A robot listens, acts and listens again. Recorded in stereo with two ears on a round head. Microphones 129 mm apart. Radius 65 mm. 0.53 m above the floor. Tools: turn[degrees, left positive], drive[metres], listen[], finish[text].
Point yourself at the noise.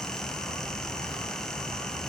Action: listen[]
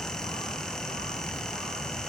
Action: listen[]
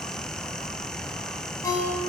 Thought: The ringtone: about 25° left or 155° left.
Action: turn[25]
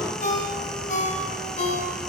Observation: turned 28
Thought: So it is at 125° left.
Action: turn[125]
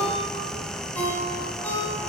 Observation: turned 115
Thought: The ringtone is now 10° left.
Action: turn[10]
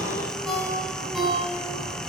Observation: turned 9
Action: finish[Found it: a ringtone, straight ahead.]